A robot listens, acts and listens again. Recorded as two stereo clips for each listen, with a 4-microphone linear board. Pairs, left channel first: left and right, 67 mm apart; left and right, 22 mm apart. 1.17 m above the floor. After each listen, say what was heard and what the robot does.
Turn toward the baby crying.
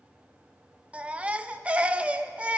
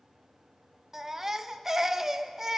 The baby crying: about 20° right or 160° right. Turn 20° right.
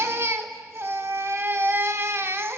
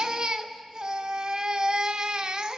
So it is at 140° right. Turn 140° right.
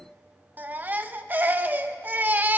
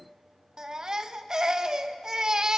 The baby crying is now 30° right. Turn 30° right.
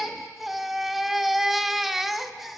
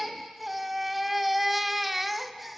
Found it: a baby crying, straight ahead, under 1 m away.